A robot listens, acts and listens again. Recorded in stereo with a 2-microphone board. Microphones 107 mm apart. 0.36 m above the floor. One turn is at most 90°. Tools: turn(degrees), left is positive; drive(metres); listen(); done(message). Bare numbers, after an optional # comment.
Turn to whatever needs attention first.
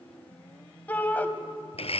turn(30)
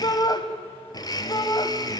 # So it is at 130° left.
turn(90)
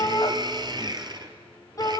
# The shout is now 45° left.
turn(45)
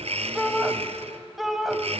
done("Found it: a shout, straight ahead.")